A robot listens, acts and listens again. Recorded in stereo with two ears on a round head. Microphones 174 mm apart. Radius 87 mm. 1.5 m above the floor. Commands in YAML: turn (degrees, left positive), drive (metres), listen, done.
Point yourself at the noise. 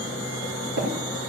turn: -55
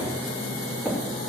listen: true
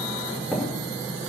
done: "Found it: tapping, straight ahead."